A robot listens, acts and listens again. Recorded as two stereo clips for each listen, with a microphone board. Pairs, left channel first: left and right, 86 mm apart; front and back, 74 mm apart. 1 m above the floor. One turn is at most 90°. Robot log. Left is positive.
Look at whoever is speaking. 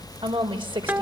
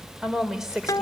note: The woman speaking: 95° right.
cmd yaw -90
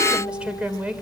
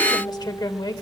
note: The woman speaking is now 15° right.
cmd yaw -15
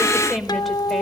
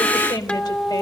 end: Facing the woman speaking.